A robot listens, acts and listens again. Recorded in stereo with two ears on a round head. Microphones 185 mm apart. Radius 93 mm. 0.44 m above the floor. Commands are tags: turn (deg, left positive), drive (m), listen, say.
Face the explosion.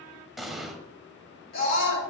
<turn deg="30"/>
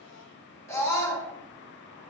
<listen/>
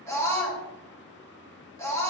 <say>I heard an explosion, but can't make it out now. It was about 30° right or 150° left.</say>